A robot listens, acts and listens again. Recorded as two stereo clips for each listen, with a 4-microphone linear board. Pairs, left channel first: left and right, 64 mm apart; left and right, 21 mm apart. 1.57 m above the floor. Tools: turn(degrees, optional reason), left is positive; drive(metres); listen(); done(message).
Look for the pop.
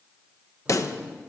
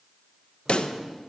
turn(degrees=55, reason="The pop: about 55° left or 125° left.")
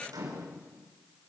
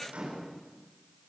listen()
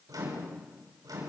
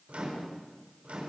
done("I heard a pop, but can't make it out now. It was about straight ahead or 70° left.")